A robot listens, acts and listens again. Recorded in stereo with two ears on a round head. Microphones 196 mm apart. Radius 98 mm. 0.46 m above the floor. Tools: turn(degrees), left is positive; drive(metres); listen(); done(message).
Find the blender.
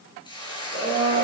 turn(degrees=55)
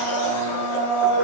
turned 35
turn(degrees=90)
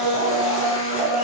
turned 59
turn(degrees=30)
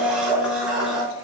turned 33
done("Found it: a blender, straight ahead, over 4 m away.")